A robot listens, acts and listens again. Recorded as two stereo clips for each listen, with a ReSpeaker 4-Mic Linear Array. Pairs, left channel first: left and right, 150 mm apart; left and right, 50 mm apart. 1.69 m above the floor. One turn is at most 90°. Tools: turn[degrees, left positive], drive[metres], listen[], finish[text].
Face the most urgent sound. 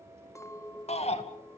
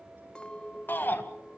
Thought: The shout: about 45° left or 135° left.
Action: turn[45]
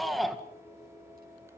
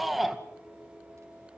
Action: finish[Found it: a shout, straight ahead.]